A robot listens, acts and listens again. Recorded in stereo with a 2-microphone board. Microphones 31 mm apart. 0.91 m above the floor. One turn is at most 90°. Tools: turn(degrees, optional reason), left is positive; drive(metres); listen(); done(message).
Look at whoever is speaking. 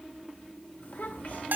turn(degrees=70, reason="The child speaking: about 70° left or 110° left.")
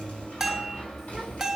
listen()
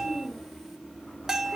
done("Found it: a child speaking, straight ahead, 2 to 4 m away.")